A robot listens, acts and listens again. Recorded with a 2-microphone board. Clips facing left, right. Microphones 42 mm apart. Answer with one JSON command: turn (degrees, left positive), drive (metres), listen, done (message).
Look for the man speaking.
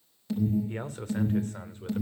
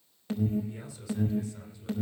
{"turn": 45}
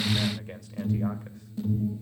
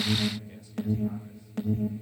{"listen": true}
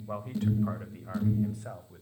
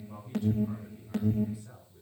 {"turn": 75}
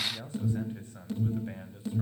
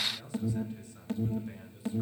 {"turn": 35}
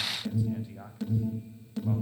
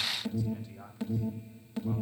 {"turn": 15}
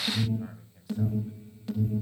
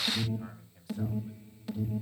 {"done": "Found it: a man speaking, straight ahead."}